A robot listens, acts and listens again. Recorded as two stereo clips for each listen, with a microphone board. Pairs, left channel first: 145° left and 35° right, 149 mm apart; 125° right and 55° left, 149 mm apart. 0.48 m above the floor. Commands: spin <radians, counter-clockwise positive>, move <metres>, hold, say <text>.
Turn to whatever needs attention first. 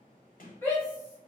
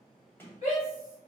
spin -2.53
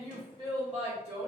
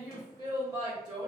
say Found it: a shout, straight ahead, 2 to 4 m away.